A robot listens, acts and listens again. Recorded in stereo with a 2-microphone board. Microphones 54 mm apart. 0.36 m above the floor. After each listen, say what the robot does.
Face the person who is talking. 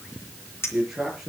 Turn 30° right.
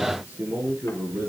Turn 145° right.
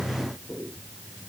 Turn 25° left.
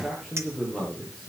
Found it: a man speaking, straight ahead, over 4 m away.